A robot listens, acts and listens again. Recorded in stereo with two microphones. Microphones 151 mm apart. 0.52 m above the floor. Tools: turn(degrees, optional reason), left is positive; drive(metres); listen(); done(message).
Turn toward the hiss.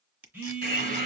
turn(degrees=-50, reason="The hiss: about 50° right or 130° right.")
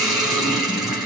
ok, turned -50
done("Facing the hiss.")